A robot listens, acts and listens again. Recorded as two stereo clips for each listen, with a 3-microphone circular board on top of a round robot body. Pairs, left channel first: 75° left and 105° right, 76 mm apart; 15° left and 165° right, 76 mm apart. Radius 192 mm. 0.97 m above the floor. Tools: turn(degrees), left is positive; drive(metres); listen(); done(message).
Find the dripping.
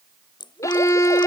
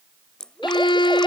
turn(degrees=95)
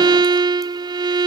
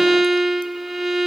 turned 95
listen()
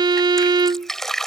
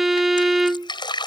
turn(degrees=-10)
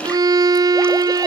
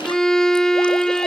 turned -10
listen()
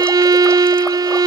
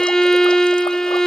listen()
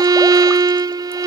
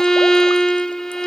done("I heard dripping from this way, but can't make it out now.")